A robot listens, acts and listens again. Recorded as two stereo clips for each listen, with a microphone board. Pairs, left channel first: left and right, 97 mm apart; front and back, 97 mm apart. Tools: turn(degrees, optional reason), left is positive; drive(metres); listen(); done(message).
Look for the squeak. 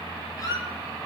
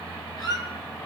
turn(degrees=40, reason="The squeak: 40° left.")
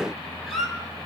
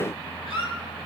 done("Facing the squeak, 2 to 4 m away.")